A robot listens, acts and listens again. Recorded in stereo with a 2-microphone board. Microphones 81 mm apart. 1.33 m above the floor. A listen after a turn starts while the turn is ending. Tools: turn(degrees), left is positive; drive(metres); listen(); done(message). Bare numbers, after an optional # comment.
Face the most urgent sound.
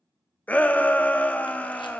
# The shout: about 20° left or 160° left.
turn(20)
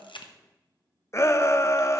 # So it is at 145° left.
turn(145)
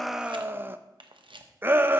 # The shout is now 25° right.
turn(-25)
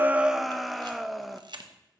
done("Found it: a shout, straight ahead.")